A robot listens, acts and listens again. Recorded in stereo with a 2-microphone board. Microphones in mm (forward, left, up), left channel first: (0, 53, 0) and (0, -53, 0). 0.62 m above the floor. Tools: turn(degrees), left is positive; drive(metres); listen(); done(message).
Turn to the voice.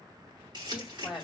turn(degrees=-30)
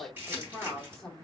turn(degrees=30)
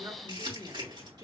turn(degrees=-35)
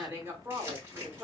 turn(degrees=-30)
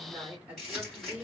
turn(degrees=-15)
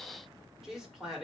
done("Found it: a woman speaking, straight ahead, 2 to 4 m away.")